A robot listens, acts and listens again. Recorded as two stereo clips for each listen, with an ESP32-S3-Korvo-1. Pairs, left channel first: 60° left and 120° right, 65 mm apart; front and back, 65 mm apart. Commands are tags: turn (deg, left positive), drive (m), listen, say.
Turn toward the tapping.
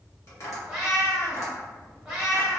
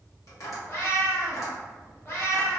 <turn deg="25"/>
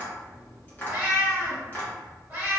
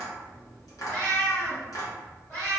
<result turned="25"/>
<say>Facing the tapping.</say>